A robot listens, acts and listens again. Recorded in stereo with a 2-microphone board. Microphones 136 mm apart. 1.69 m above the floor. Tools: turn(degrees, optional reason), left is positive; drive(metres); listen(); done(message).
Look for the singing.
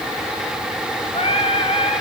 turn(degrees=45, reason="The singing: about 45° left or 135° left.")
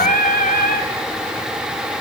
turn(degrees=90, reason="So it is at 90° left.")
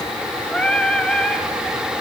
done("Found it: singing, straight ahead, 2 to 4 m away.")